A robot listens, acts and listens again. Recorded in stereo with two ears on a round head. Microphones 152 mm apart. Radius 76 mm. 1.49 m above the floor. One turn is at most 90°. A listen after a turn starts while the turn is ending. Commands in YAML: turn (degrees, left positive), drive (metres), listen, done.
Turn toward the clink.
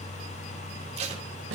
listen: true
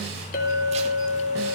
turn: 50
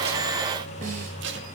listen: true
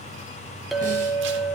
done: "Found it: a clink, straight ahead, 2 to 4 m away."